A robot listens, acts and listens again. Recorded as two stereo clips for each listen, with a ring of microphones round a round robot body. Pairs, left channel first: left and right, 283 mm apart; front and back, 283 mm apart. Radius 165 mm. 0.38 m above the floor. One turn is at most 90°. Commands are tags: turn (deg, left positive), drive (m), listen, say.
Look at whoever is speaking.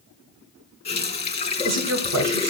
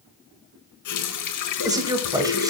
<turn deg="-90"/>
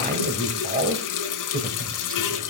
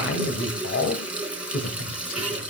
<turn deg="-35"/>
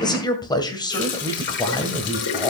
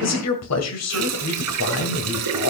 <turn deg="15"/>
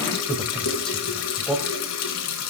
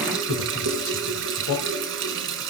<say>Found it: a man speaking, straight ahead.</say>